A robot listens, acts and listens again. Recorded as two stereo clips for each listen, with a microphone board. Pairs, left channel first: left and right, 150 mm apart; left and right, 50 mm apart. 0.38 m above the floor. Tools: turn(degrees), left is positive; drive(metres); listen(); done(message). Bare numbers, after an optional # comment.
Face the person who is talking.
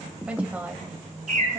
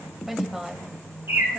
turn(-30)
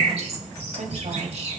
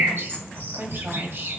# So it is at 125° right.
turn(-125)
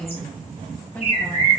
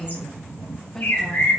# The woman speaking is now 20° left.
turn(20)
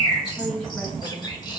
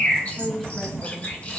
# The woman speaking is now 10° left.
turn(10)
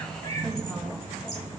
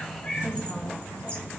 listen()
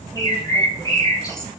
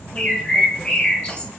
listen()
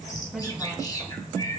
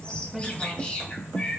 done("I heard a woman speaking from this way, but can't make it out now.")